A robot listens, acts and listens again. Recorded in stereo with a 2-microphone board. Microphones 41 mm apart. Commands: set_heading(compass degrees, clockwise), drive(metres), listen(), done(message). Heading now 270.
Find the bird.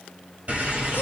set_heading(305)
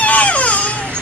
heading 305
set_heading(55)
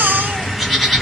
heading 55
done("Found it: a bird, straight ahead, 1 to 2 m away.")